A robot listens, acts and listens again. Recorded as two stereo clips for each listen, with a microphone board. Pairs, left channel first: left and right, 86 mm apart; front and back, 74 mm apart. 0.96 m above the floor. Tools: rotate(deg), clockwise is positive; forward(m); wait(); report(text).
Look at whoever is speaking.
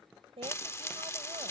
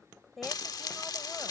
rotate(90)
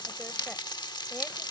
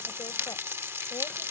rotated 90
wait()
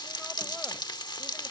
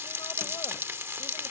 wait()
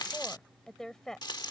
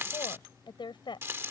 report("Found it: a woman speaking, straight ahead.")